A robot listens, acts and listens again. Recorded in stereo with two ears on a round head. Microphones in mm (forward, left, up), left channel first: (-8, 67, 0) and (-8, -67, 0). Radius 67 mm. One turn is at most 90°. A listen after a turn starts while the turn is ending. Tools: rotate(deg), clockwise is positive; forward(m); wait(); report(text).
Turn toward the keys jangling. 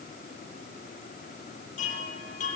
wait()
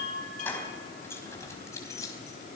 rotate(-20)
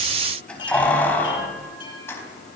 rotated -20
rotate(-15)
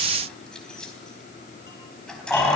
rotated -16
rotate(-30)
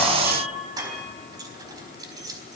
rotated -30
rotate(25)
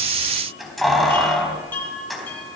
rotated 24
report("Facing the keys jangling.")